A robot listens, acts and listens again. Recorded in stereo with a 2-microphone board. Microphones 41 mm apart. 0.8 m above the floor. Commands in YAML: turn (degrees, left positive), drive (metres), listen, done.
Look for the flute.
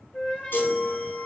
turn: 25
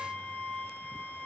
turn: 130
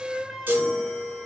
turn: -20
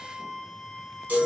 done: "Facing the flute, 1 to 2 m away."